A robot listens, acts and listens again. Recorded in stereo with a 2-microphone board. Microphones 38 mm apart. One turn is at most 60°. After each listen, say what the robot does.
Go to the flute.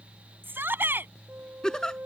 Turn 60° right.
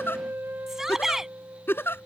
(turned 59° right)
Turn 60° right.
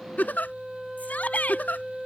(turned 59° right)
Drive 1.0 m forward.
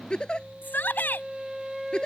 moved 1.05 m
Turn 10° right.
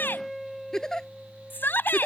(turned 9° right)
Drive 1.0 m forward.
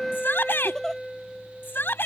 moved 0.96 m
Drive 1.0 m forward.
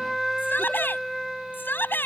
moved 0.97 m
Drive 1.0 m forward.
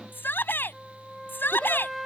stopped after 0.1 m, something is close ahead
I am next to the flute.